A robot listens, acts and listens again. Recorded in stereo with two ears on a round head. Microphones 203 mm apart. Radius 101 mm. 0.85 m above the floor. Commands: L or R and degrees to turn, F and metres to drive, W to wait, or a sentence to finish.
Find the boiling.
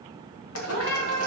L65
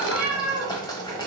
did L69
L20
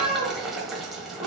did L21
Facing the boiling, 1 to 2 m away.